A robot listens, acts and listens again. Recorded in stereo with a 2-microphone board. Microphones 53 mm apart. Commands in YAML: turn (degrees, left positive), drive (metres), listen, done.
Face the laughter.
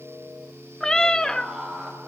turn: -15
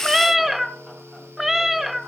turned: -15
listen: true
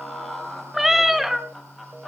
done: "Facing the laughter, over 4 m away."